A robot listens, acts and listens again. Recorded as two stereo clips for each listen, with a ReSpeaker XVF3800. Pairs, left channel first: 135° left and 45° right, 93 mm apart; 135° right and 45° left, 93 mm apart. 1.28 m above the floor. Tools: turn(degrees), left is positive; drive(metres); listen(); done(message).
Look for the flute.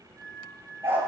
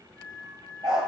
turn(degrees=90)
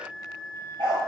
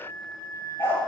done("Facing the flute, 2 to 4 m away.")